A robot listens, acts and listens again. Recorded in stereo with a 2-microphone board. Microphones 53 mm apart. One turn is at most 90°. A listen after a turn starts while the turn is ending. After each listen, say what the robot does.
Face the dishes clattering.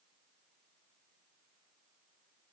Keep listening.
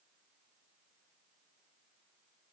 Keep listening.
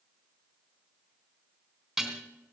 Turn 30° right.
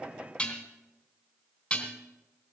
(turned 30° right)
Turn 25° left.
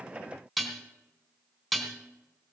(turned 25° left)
Found it: dishes clattering, straight ahead, 2 to 4 m away.